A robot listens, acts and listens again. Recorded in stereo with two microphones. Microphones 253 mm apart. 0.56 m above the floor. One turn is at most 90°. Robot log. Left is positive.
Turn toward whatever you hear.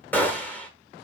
cmd yaw +30
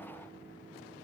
cmd idle
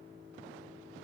end: I heard a gunshot, but can't make it out now. It was about 25° right or 145° left.